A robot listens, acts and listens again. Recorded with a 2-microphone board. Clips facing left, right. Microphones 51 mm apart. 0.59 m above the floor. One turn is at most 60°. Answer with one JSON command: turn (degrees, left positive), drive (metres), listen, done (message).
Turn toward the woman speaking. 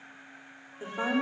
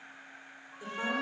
{"turn": 25}
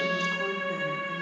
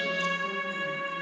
{"listen": true}
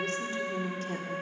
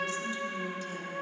{"turn": 60}
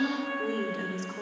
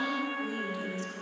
{"turn": 60}
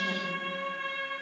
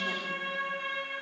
{"turn": 15}
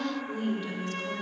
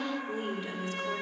{"turn": -15}
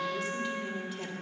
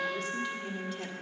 {"done": "Found it: a woman speaking, straight ahead."}